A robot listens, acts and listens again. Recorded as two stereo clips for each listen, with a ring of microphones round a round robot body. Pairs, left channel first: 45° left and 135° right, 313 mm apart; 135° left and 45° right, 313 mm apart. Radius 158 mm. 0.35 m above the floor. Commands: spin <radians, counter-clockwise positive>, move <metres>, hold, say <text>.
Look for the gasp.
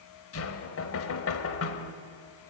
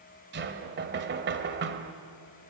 hold
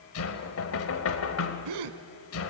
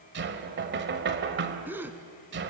spin -2.27
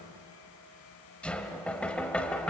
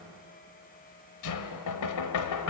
say I heard a gasp from this way, but can't make it out now.